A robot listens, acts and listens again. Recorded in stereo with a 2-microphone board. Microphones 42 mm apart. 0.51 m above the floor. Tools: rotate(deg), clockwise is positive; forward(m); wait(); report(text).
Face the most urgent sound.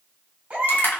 rotate(40)
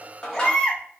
report("Facing the baby crying.")